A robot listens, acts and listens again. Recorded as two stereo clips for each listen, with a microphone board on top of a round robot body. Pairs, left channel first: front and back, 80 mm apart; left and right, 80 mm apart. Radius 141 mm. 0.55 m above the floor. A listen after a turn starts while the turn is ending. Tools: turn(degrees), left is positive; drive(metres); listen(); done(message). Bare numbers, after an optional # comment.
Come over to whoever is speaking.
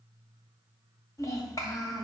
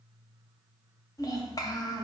# The child speaking: 50° left.
turn(50)
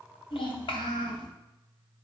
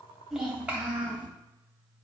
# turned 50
# The child speaking is now 15° right.
turn(-15)
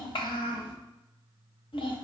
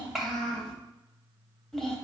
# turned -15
drive(1.0)
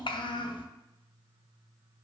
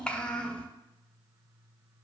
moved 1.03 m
# The child speaking is now 15° left.
turn(15)
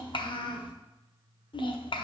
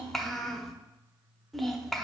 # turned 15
drive(1.0)
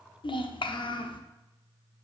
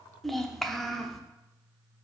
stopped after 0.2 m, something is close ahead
done("Arrived at the child speaking, straight ahead.")